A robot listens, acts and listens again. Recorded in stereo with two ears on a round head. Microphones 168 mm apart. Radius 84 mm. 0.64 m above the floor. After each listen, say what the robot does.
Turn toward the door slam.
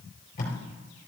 Keep listening.
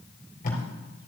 Keep listening.
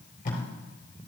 I can't make out a door slam, only tape being pulled.